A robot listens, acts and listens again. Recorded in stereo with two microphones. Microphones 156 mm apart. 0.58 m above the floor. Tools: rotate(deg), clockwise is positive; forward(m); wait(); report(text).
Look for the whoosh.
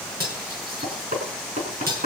wait()
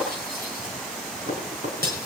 wait()
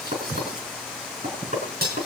report("I can't make out a whoosh to turn to.")